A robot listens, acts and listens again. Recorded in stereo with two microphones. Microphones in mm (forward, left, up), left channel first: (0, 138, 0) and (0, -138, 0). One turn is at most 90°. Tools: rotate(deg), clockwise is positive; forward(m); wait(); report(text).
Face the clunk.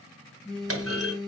rotate(55)
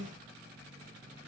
wait()
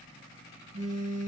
report("I heard a clunk, but can't make it out now. It was about straight ahead or 70° right.")